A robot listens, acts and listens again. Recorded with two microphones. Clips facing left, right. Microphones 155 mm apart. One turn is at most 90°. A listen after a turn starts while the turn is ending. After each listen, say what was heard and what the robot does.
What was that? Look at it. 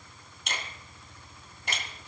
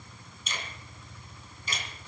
The finger snap: about 65° left or 115° left. Turn 65° left.
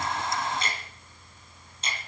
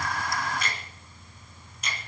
So it is at 30° left. Turn 30° left.
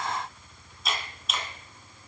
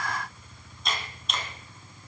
Found it: a finger snap, straight ahead.